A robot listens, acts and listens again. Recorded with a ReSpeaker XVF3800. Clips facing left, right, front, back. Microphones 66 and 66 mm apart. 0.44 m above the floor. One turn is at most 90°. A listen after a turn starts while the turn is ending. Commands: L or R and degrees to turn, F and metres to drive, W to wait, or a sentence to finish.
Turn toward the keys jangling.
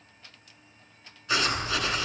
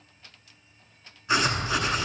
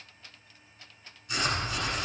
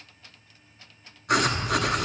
R60
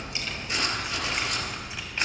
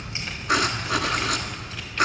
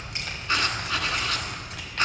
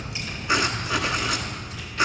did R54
L15
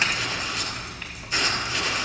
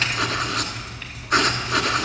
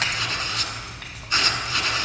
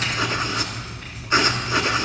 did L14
L10
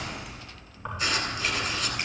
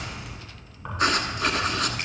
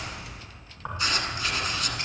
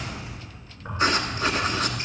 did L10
Found it: keys jangling, straight ahead, 2 to 4 m away.